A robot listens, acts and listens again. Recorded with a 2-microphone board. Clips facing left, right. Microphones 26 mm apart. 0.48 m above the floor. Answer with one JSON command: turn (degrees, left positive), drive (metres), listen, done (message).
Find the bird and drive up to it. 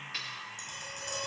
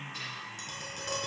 {"listen": true}
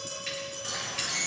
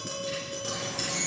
{"turn": 30}
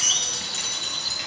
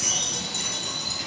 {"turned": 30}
{"turn": 120}
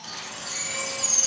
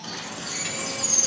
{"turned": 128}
{"turn": -10}
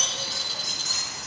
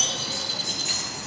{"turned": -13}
{"drive": 1.0}
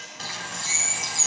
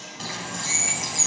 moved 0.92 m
{"drive": 1.0}
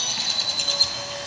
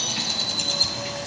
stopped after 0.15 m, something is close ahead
{"turn": 10}
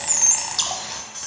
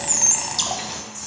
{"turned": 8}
{"done": "Arrived at the bird, straight ahead."}